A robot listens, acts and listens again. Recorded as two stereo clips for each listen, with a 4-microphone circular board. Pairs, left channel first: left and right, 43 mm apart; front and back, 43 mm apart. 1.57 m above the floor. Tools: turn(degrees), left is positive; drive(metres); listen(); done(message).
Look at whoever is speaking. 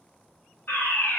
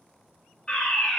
listen()
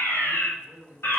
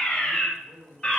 turn(degrees=-135)
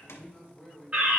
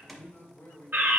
done("Facing the man speaking.")